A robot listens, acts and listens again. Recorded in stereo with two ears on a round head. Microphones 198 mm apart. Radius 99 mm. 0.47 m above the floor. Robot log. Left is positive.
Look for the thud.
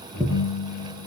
note: The thud: about 20° right or 160° right.
cmd yaw -20
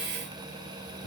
cmd idle
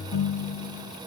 end: I heard a thud, but can't make it out now. It was about straight ahead or 140° right.